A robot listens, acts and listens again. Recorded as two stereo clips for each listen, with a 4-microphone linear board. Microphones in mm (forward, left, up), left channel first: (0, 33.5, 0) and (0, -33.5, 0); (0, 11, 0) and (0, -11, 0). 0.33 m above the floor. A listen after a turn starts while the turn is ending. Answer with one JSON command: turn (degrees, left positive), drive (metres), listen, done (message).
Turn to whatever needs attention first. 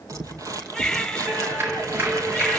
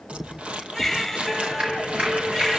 {"turn": 30}
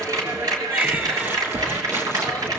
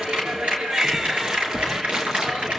{"listen": true}
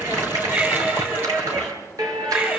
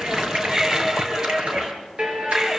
{"turn": -25}
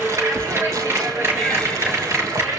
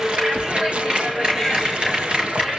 {"listen": true}
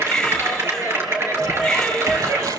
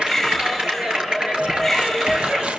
{"done": "Found it: a baby crying, straight ahead, 2 to 4 m away."}